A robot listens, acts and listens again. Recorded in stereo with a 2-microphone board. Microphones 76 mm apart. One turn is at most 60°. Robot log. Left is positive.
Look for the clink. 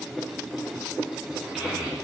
cmd idle
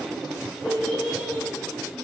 cmd idle
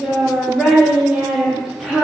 end: I can't make out a clink to turn to.